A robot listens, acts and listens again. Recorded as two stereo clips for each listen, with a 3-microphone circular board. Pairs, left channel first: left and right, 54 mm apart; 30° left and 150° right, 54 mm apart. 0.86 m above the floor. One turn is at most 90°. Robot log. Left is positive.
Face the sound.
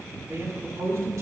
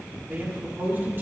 note: The man speaking: 105° right.
cmd yaw -90
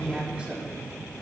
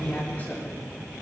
note: The man speaking is now 25° right.
cmd yaw -25
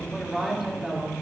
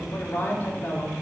note: The man speaking is now 15° right.
cmd yaw -15
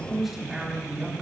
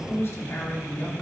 note: The man speaking is now 15° right.
cmd yaw -15
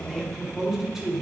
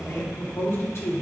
note: The man speaking is now 15° right.
cmd yaw -15
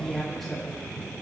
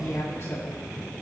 end: Found it: a man speaking, straight ahead, 2 to 4 m away.